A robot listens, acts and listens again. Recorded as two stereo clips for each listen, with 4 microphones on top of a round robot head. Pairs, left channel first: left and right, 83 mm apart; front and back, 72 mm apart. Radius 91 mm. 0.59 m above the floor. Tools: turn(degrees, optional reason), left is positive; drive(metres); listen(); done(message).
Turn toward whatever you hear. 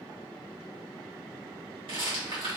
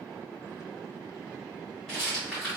turn(degrees=-80, reason="The rattle: 80° right.")
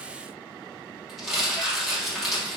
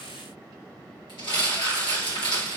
done("Found it: a rattle, straight ahead.")